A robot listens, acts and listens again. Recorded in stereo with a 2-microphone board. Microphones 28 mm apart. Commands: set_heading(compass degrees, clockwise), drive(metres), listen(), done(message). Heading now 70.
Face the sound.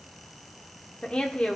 set_heading(25)
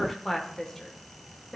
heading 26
set_heading(6)
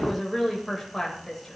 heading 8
set_heading(358)
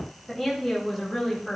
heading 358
done("Facing the woman speaking, over 4 m away.")